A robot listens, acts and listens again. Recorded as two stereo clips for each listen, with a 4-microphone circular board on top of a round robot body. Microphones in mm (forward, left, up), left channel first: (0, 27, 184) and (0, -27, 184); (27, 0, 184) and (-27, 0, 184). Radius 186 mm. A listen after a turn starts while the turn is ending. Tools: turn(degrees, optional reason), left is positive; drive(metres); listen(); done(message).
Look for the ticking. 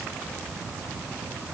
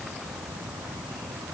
listen()
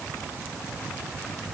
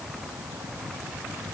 listen()
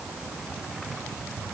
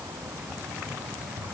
done("I can't make out ticking.")